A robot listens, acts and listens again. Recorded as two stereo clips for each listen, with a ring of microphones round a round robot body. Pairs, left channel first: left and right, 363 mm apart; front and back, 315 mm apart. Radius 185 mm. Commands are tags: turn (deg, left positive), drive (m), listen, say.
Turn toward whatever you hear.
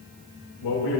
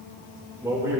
<turn deg="100"/>
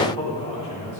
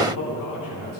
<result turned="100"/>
<turn deg="20"/>
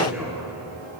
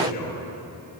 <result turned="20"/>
<say>Found it: a man speaking, straight ahead.</say>